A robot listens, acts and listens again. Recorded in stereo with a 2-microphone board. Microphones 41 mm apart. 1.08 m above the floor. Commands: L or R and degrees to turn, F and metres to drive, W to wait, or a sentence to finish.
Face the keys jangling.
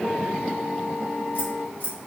L45
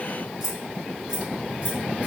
R25
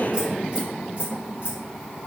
R40
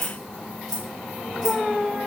R10
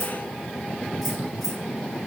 W
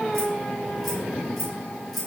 Facing the keys jangling.